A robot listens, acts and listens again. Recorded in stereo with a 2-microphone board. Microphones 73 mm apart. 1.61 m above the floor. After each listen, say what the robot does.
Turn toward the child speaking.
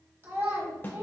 Turn 35° right.
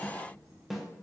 Keep listening.
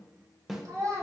Turn 105° right.
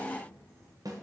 Keep listening.
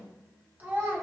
Turn 30° right.
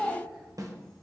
Facing the child speaking, 1 to 2 m away.